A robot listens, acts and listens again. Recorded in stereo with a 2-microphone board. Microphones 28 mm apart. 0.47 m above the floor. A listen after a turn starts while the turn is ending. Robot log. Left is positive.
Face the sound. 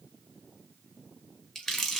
note: The crumpling: about 15° left or 165° left.
cmd yaw +15
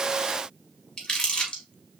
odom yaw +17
note: So it is at 145° left.
cmd yaw +145
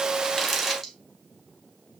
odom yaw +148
end: Found it: crumpling, straight ahead, 1 to 2 m away.